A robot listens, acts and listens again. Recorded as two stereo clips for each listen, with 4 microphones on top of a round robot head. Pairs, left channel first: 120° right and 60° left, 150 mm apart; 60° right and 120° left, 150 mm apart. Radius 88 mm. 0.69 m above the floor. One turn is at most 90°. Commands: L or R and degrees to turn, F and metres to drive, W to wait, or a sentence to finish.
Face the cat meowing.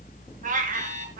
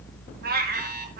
L90
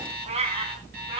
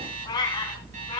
Found it: a cat meowing, straight ahead.